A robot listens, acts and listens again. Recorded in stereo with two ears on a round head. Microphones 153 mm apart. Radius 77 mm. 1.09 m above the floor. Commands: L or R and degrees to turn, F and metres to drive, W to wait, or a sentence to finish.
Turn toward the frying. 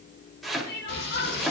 L75
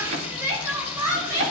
L30
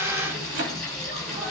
Found it: frying, straight ahead, over 4 m away.